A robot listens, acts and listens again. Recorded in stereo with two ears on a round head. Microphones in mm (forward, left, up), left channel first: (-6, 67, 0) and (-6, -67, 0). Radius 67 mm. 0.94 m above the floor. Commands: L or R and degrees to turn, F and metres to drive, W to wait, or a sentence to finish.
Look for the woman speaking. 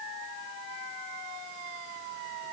W
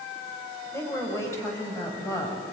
L25
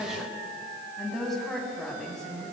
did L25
Found it: a woman speaking, straight ahead, over 4 m away.